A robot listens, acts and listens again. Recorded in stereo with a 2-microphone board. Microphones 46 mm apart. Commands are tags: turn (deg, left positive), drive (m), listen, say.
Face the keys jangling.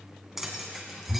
<turn deg="-30"/>
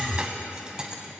<turn deg="-20"/>
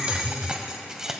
<turn deg="-30"/>
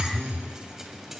<listen/>
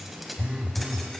<turn deg="30"/>
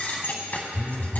<turn deg="135"/>
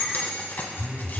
<turn deg="50"/>
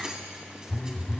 <listen/>
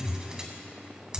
<turn deg="-20"/>
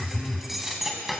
<say>Found it: keys jangling, straight ahead.</say>